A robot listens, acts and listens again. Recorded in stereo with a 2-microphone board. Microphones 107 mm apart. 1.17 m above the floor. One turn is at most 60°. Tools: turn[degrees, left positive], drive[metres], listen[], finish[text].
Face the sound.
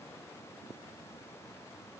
Action: listen[]
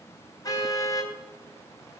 Thought: The car horn: about 35° left or 145° left.
Action: turn[35]
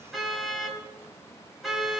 Action: finish[Found it: a car horn, straight ahead.]